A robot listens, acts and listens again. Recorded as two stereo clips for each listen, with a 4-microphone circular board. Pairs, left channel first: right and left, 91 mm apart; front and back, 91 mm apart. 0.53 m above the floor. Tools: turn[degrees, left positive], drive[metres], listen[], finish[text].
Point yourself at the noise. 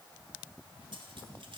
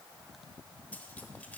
Action: listen[]
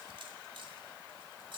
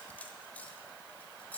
Thought: The cutlery clinking: 70° left.
Action: turn[70]
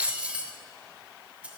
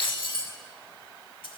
Thought: The cutlery clinking is now 15° left.
Action: turn[15]
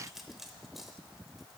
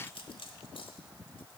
Action: finish[Found it: cutlery clinking, straight ahead, 1 to 2 m away.]